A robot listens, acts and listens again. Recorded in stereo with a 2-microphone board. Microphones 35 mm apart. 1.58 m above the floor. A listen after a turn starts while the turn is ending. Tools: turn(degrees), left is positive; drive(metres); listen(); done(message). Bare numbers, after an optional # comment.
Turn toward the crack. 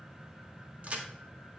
# The crack: about 40° right or 140° right.
turn(-40)
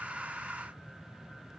listen()
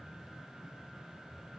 done("I heard a crack, but can't make it out now. It was about straight ahead or 100° right.")